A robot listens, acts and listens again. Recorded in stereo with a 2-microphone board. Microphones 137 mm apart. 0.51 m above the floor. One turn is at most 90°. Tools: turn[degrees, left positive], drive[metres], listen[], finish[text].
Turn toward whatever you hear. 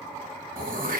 Action: turn[-90]
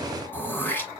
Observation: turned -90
Thought: So it is at 15° left.
Action: turn[15]
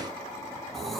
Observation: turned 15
Action: finish[Facing the throat clearing, 1 to 2 m away.]